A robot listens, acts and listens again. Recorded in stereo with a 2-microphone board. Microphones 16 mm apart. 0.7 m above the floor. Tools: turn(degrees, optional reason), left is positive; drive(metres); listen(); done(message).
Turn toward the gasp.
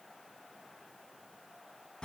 listen()
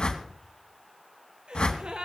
turn(degrees=-90)
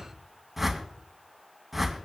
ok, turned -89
done("Facing where the gasp came from. I can't hear it now.")